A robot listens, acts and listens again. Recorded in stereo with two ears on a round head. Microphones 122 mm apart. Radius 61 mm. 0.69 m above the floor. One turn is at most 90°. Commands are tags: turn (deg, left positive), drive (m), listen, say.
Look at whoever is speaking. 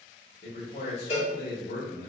<turn deg="65"/>
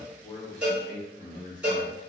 <turn deg="35"/>
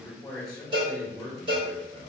<say>Found it: a man speaking, straight ahead, 1 to 2 m away.</say>